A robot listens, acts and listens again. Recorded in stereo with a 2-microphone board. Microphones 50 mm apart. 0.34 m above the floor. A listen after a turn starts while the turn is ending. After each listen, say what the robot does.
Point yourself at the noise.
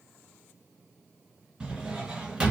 Turn 15° right.
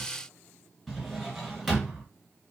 Facing the drawer, 1 to 2 m away.